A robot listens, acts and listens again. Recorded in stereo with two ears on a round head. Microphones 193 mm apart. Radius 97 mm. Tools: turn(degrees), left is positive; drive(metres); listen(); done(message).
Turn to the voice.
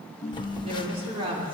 turn(degrees=-25)
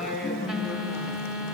done("Found it: a woman speaking, straight ahead, over 4 m away.")